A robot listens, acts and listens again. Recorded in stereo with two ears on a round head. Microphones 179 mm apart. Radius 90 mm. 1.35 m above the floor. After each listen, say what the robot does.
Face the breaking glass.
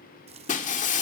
Turn 40° left.
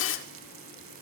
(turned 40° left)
Turn 95° left.
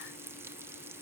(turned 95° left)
I heard breaking glass from this way, but can't make it out now.